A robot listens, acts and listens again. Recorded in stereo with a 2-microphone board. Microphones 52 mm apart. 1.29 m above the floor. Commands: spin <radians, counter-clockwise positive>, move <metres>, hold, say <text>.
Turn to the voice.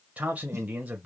spin -0.44
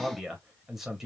say Found it: a man speaking, straight ahead.